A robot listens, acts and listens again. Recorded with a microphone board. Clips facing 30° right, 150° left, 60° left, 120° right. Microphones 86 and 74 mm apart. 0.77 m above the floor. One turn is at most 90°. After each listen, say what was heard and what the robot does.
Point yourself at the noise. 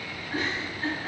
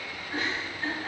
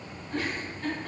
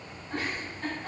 The giggle: 115° right. Turn 90° right.
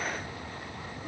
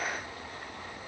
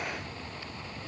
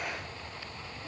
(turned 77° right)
Nothing new. It was at 40° right. Turn 40° right.
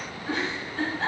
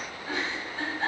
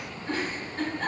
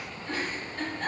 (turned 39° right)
Found it: a giggle, straight ahead.